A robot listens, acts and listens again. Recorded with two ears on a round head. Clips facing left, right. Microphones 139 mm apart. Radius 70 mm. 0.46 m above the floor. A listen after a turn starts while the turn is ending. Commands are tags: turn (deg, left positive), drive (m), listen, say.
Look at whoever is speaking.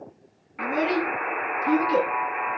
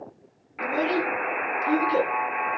<turn deg="25"/>
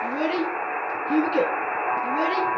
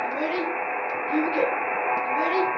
<turn deg="135"/>
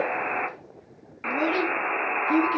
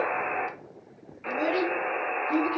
<turn deg="40"/>
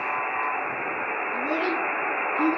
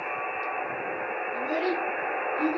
<turn deg="35"/>
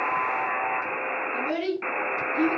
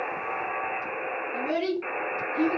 <say>Found it: a child speaking, straight ahead, over 4 m away.</say>